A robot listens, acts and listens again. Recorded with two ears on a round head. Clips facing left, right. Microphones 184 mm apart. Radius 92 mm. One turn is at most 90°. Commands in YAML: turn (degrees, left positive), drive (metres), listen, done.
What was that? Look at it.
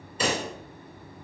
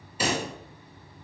turn: -30
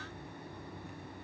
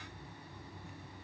listen: true
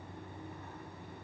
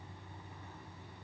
done: "I heard a pop, but can't make it out now. It was about 20° left or 140° right."